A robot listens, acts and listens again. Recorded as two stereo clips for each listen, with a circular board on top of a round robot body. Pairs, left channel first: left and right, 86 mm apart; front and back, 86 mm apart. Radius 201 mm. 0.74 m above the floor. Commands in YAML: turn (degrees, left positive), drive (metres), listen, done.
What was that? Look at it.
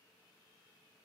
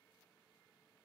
listen: true
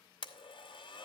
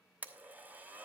turn: 110
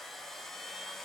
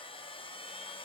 done: "Found it: a blender, straight ahead, under 1 m away."